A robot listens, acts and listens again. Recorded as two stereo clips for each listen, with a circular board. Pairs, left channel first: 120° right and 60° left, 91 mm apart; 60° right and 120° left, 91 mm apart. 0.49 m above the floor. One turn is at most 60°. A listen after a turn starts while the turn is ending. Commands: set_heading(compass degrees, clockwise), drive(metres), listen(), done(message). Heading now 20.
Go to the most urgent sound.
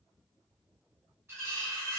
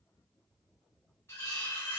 listen()
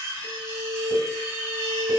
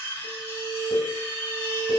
set_heading(70)
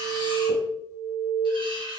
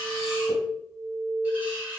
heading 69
drive(1.0)
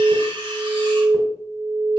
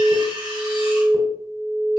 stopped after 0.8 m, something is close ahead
set_heading(79)
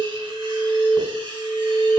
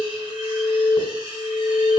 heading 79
done("I am next to the alarm.")